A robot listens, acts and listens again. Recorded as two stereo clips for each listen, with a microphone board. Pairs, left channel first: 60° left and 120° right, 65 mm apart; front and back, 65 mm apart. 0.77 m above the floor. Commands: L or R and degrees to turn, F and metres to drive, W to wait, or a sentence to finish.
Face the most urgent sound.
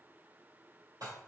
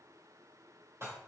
W
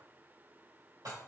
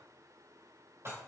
W
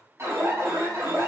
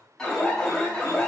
R80
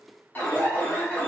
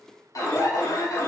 Found it: an alarm, straight ahead, 1 to 2 m away.